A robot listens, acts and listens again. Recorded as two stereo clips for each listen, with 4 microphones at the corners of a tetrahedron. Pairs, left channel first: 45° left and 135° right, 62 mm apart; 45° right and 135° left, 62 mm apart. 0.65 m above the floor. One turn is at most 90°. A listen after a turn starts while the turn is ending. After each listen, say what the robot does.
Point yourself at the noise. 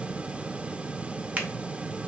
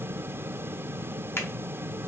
Turn 75° right.
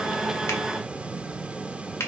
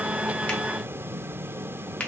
Turn 15° left.
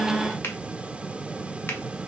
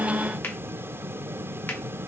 Keep listening.
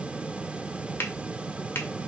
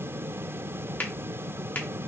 Facing the finger snap.